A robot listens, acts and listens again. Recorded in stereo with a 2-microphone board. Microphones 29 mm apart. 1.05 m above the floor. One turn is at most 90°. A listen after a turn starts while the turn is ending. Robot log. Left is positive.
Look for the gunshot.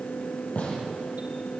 note: The gunshot: about 50° left or 130° left.
cmd yaw +50
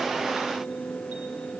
cmd idle
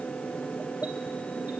end: I heard a gunshot, but can't make it out now. It was about straight ahead or 80° left.